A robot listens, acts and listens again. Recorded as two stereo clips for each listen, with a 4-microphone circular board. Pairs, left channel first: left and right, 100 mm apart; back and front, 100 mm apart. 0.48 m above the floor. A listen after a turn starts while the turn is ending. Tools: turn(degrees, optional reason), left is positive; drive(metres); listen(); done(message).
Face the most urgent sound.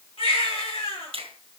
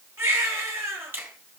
turn(degrees=65, reason="The baby crying: 65° left.")
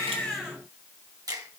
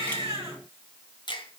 listen()
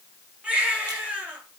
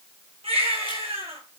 turn(degrees=-15, reason="The baby crying is now 15° right.")
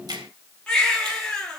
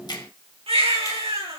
done("Facing the baby crying, over 4 m away.")